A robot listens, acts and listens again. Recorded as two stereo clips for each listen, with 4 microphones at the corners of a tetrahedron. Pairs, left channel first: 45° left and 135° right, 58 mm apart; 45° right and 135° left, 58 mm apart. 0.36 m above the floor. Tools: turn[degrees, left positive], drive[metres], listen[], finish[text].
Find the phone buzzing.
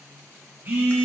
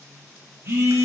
Thought: The phone buzzing: 175° left.
Action: turn[175]
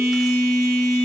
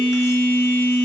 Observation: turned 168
Thought: The phone buzzing is now 10° left.
Action: turn[10]
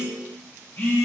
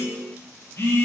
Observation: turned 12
Action: finish[Facing the phone buzzing, 2 to 4 m away.]